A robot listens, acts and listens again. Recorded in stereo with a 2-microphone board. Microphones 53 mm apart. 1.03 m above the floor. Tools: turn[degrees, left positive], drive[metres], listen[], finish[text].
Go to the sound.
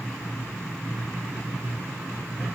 Action: listen[]
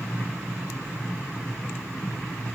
Action: listen[]
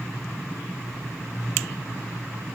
Action: finish[I can't make out anything to turn to.]